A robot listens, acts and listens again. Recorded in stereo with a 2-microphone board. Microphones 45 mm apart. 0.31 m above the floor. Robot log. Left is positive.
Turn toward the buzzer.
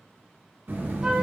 note: The buzzer: about 55° right or 125° right.
cmd yaw -55
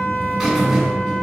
note: So it is at 10° right.
cmd yaw -10
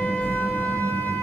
end: Facing the buzzer, 2 to 4 m away.